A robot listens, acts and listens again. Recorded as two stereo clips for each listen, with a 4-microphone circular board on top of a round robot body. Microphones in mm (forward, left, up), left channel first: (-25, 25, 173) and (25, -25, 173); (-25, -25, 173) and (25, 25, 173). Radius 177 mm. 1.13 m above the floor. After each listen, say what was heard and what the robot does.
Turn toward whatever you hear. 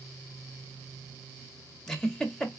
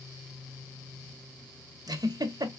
The giggle: 55° left. Turn 55° left.
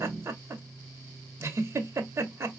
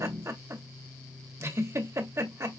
Facing the giggle.